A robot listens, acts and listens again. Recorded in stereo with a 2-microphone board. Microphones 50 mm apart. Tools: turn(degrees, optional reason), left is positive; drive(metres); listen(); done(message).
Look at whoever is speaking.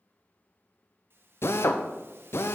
listen()
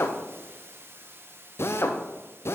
listen()
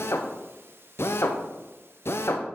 done("I can't make out anyone speaking, only a hiss and a drill.")